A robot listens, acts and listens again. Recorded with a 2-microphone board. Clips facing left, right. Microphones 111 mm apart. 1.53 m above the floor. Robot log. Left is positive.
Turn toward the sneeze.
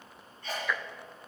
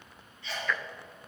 note: The sneeze: about 45° left or 135° left.
cmd yaw +45
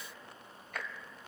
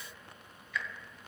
cmd idle
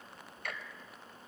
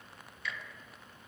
end: I heard a sneeze, but can't make it out now. It was about straight ahead or 90° left.